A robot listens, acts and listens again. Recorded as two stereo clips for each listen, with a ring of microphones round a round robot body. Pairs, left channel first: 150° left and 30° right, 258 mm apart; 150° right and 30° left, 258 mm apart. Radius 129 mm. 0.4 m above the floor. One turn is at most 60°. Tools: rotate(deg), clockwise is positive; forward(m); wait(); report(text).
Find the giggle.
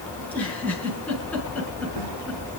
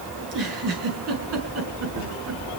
rotate(-60)
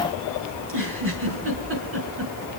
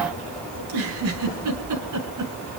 rotate(-15)
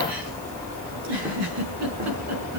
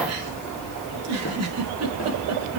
report("Found it: a giggle, straight ahead.")